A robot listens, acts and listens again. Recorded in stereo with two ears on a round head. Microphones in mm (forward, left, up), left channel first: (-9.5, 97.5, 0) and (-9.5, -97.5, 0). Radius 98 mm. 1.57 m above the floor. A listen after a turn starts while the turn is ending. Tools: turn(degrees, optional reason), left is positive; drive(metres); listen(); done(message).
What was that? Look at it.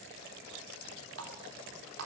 turn(degrees=-70, reason="The running tap: about 70° right or 110° right.")
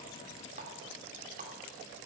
turn(degrees=-35, reason="So it is at 35° right.")
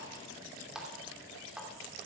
done("Facing the running tap, 2 to 4 m away.")